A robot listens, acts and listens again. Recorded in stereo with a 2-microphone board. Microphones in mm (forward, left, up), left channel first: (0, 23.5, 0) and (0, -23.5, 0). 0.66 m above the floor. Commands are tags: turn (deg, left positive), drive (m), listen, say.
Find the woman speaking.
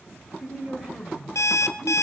<turn deg="-30"/>
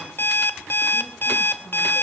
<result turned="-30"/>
<listen/>
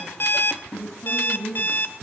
<turn deg="30"/>
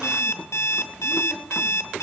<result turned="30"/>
<listen/>
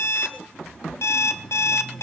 <listen/>
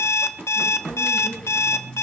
<say>Facing where the woman speaking came from. I can't hear it now.</say>